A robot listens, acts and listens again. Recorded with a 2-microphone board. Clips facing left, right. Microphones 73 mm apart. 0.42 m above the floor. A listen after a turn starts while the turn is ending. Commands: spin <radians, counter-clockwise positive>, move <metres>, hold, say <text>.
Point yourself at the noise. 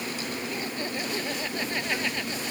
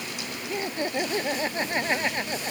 spin -0.52
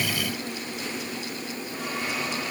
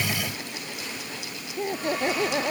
spin -2.09
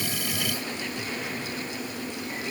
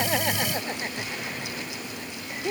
spin -0.70
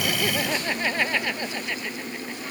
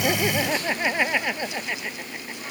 spin -0.26
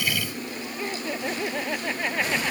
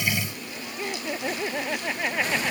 say Facing the laughter.